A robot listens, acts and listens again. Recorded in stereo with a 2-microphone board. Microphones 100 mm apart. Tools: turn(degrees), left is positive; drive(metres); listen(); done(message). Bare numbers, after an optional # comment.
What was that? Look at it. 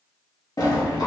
# The sliding door: about 40° left or 140° left.
turn(40)
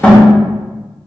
# So it is at 15° left.
turn(15)
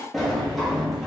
done("Found it: a sliding door, straight ahead.")